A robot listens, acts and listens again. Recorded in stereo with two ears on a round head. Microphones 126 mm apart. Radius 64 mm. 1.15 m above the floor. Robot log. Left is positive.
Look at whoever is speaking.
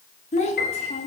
note: The child speaking: about 50° left or 130° left.
cmd yaw +50
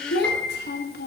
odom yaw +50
note: So it is at 75° left.
cmd yaw +75
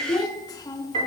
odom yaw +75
note: The child speaking is now 25° left.
cmd yaw +25
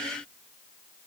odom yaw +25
cmd idle
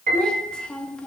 end: Found it: a child speaking, straight ahead.